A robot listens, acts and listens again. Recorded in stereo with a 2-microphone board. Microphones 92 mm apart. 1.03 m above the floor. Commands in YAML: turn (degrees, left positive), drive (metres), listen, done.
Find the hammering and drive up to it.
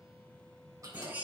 listen: true
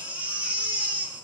listen: true
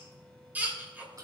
done: "I can't make out hammering to turn to."